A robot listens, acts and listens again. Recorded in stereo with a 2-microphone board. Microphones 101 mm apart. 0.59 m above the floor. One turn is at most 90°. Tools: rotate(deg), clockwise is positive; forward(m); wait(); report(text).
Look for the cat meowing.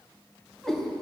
rotate(-30)
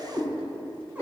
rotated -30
rotate(20)
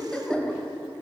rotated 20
report("Facing the cat meowing, 2 to 4 m away.")